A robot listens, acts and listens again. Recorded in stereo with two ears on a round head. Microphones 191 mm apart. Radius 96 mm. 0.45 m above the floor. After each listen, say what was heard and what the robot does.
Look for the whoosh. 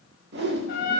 The whoosh: about 50° right or 130° right. Turn 50° right.
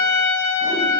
Keep listening.
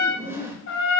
So it is at 15° right. Turn 15° right.
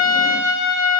Keep listening.
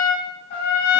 Keep listening.
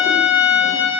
I heard a whoosh from this way, but can't make it out now.